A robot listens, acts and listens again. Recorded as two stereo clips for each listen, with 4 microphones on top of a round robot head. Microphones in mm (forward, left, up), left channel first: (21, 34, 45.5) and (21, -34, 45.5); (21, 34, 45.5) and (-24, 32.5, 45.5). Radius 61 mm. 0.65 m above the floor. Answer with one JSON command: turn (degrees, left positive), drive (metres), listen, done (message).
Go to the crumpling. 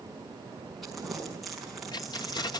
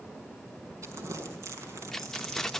{"turn": 180}
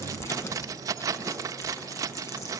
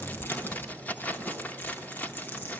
{"turn": 40}
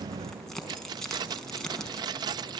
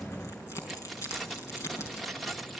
{"turn": 10}
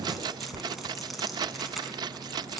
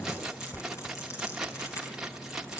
{"drive": 1.0}
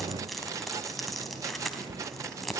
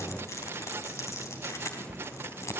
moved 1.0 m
{"drive": 1.0}
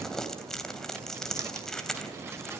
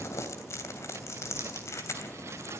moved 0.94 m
{"turn": 10}
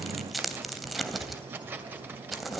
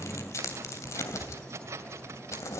{"drive": 1.0}
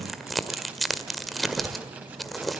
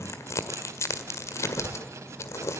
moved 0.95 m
{"drive": 1.0}
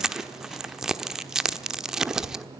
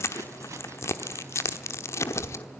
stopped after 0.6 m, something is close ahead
{"turn": -10}
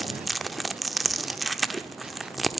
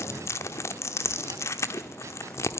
{"done": "Arrived at the crumpling, straight ahead."}